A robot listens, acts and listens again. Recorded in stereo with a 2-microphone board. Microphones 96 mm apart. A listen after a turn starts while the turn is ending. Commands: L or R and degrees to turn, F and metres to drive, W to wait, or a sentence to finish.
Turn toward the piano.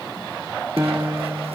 R30
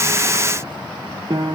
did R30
R115
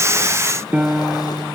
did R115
R20
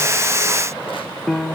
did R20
Found it: a piano, straight ahead, under 1 m away.